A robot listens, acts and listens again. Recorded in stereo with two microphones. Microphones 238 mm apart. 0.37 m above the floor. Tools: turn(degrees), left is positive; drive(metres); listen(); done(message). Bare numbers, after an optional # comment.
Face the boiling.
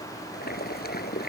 # The boiling: about 40° left or 140° left.
turn(40)
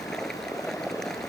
done("Found it: boiling, straight ahead.")